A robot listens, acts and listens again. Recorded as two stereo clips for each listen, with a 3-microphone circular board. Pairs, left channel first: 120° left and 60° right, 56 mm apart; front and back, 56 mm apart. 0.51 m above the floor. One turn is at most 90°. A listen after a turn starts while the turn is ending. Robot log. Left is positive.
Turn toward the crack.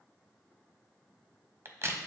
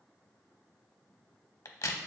note: The crack: 20° right.
cmd yaw -20
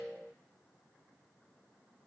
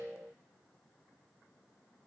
end: Facing where the crack came from. I can't hear it now.